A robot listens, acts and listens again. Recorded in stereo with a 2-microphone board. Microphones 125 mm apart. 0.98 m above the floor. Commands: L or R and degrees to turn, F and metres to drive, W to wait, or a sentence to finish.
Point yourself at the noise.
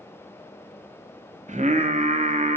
R75
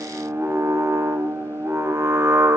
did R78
R20
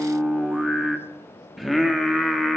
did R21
Facing the singing, under 1 m away.